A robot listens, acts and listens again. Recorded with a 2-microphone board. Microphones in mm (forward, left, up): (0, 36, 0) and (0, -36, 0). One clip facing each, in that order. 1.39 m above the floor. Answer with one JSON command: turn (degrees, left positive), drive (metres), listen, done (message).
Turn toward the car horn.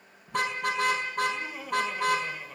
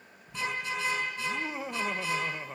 {"turn": 60}
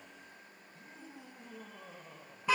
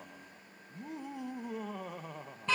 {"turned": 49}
{"turn": 10}
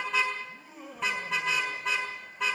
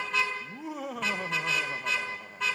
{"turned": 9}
{"done": "Found it: a car horn, straight ahead, over 4 m away."}